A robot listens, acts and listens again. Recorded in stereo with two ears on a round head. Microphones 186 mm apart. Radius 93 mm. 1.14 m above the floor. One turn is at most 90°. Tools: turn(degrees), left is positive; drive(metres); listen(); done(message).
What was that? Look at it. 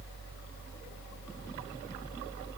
listen()
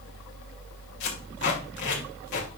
turn(degrees=55)
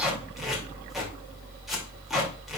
done("Found it: tape being pulled, straight ahead.")